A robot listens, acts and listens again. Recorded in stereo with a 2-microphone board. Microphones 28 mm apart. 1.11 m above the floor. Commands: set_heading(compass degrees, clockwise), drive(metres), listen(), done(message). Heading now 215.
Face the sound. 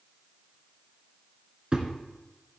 set_heading(250)
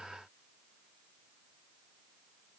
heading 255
listen()
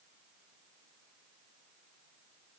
done("I heard a thud, but can't make it out now. It was about 5° left or 105° right.")